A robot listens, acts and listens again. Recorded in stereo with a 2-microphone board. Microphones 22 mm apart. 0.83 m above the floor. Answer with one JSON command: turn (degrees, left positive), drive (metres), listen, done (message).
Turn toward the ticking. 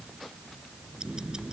{"turn": -40}
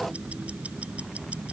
{"turn": -95}
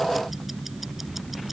{"done": "Found it: ticking, straight ahead."}